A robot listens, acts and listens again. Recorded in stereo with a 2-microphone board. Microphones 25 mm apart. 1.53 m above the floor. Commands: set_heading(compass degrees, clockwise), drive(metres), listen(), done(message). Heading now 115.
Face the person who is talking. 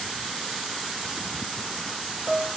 listen()
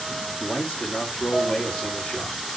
set_heading(55)
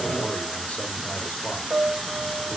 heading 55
listen()
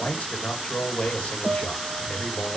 set_heading(340)
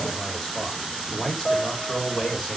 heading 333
done("Found it: a man speaking, straight ahead, 2 to 4 m away.")